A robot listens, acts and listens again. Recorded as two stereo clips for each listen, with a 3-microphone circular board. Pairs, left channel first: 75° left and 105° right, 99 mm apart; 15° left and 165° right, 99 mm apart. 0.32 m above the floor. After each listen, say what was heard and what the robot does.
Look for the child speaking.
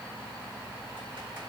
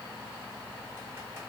Keep listening.
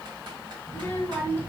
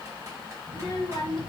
The child speaking: 10° left. Turn 10° left.
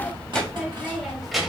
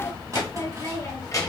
The child speaking is now 20° right. Turn 20° right.
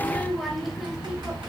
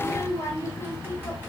The child speaking is now 40° right. Turn 40° right.
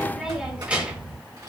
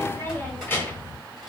The child speaking is now 35° right. Turn 35° right.
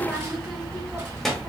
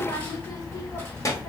The child speaking is now 15° right. Turn 15° right.
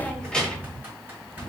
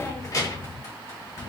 Facing the child speaking, 1 to 2 m away.